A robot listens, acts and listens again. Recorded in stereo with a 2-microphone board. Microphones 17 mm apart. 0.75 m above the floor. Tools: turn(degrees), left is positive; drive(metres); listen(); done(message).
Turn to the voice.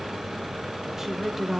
turn(degrees=-25)
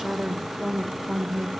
turn(degrees=-30)
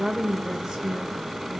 turn(degrees=-135)
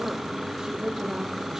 turn(degrees=-45)
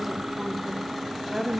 done("Found it: a woman speaking, straight ahead, 2 to 4 m away.")